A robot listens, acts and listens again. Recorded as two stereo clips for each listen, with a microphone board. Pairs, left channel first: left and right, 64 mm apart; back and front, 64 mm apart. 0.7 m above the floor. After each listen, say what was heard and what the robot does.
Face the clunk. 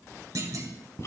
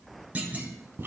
The clunk: 65° right. Turn 65° right.
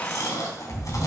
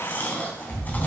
Facing where the clunk came from. I can't hear it now.